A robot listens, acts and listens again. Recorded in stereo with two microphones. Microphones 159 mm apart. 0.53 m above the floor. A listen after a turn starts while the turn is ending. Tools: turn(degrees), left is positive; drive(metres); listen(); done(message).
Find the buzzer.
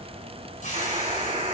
turn(degrees=-40)
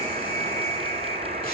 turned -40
turn(degrees=-100)
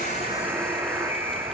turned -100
turn(degrees=-20)
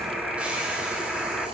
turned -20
done("Found it: a buzzer, straight ahead.")